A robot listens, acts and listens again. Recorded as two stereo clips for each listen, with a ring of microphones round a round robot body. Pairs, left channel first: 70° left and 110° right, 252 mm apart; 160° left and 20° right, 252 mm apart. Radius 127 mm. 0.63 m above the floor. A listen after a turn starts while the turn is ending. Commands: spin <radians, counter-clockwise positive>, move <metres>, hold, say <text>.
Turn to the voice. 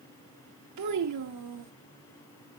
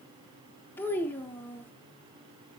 spin -2.09
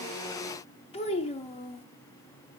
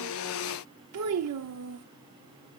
say Facing the child speaking, under 1 m away.